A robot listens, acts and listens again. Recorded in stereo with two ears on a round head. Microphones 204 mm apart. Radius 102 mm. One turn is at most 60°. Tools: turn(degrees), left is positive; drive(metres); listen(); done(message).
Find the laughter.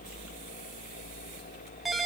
listen()
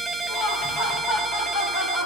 turn(degrees=60)
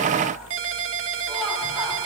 listen()
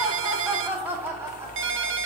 turn(degrees=-10)
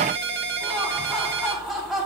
done("Facing the laughter.")